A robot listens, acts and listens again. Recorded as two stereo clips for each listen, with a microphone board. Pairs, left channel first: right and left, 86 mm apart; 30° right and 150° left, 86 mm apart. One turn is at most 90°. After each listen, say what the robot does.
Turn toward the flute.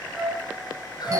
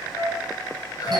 Facing the flute, 2 to 4 m away.